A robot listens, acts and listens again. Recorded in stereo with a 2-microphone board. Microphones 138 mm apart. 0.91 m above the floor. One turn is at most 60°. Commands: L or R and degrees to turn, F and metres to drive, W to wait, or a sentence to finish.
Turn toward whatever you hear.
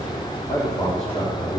L55
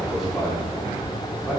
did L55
R10
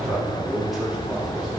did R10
Found it: a man speaking, straight ahead.